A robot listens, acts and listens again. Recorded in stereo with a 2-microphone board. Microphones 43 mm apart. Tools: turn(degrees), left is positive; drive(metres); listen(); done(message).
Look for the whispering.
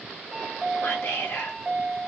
turn(degrees=90)
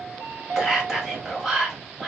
turn(degrees=-10)
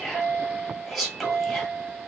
done("Facing the whispering, 1 to 2 m away.")